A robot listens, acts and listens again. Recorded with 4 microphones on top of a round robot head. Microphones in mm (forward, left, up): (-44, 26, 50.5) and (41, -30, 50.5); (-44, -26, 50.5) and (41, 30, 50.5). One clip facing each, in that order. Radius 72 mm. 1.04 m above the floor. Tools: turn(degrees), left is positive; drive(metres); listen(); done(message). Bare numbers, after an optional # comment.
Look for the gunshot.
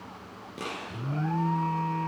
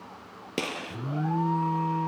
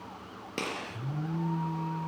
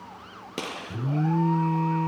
# The gunshot: 50° right.
turn(-50)
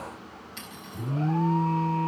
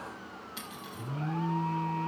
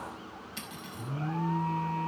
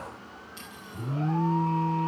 done("I heard a gunshot from this way, but can't make it out now.")